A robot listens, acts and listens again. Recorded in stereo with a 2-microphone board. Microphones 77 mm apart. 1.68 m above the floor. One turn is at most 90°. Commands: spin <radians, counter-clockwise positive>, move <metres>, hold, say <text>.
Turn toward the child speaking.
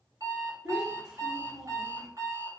spin -0.52
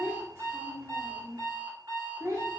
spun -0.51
spin -1.57
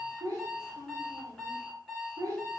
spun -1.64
spin -0.87
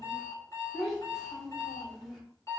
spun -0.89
say Found it: a child speaking, straight ahead.